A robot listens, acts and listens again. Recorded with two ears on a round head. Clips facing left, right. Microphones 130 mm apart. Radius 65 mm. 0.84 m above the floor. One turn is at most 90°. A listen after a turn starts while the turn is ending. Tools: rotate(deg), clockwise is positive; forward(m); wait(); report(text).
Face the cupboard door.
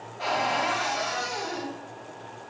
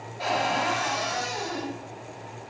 rotate(30)
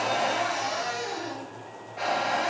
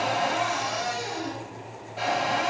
rotate(90)
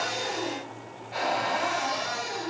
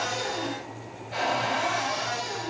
rotate(60)
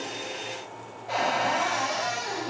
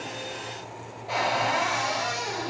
rotate(10)
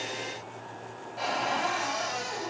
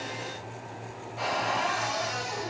report("Facing the cupboard door, 1 to 2 m away.")